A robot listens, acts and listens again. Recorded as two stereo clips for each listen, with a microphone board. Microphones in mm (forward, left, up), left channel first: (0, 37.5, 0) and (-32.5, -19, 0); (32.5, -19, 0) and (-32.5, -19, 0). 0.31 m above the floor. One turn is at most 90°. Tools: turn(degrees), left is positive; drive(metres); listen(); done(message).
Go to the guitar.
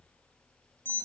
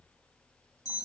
listen()
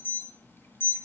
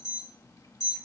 listen()
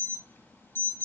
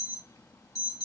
done("I can't make out a guitar to turn to.")